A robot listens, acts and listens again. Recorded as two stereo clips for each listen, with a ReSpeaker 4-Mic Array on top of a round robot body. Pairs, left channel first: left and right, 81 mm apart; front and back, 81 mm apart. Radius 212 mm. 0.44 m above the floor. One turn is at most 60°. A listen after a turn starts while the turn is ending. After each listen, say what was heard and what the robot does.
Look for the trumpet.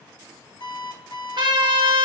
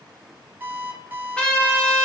The trumpet: 75° right. Turn 60° right.
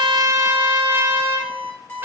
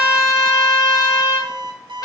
The trumpet is now 30° right. Turn 30° right.
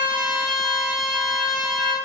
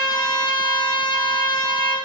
Facing the trumpet, 1 to 2 m away.